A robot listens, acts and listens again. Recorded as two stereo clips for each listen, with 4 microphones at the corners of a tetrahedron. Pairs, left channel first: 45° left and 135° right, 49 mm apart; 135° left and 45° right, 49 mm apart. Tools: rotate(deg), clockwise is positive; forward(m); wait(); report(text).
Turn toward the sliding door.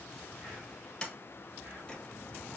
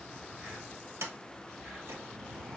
rotate(30)
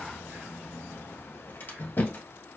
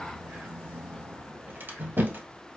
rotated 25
report("Facing the sliding door, 1 to 2 m away.")